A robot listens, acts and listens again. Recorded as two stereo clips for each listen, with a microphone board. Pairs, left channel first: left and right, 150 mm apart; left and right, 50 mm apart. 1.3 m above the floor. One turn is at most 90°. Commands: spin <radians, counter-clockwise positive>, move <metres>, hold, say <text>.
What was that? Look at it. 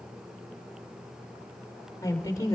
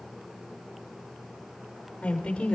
spin 0.44
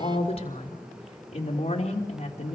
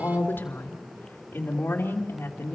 spin 1.57
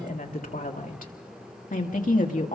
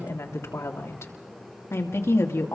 spin 1.13
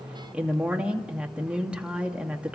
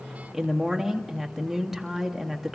spin -0.17
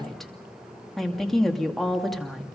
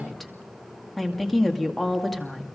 say Found it: a woman speaking, straight ahead, 2 to 4 m away.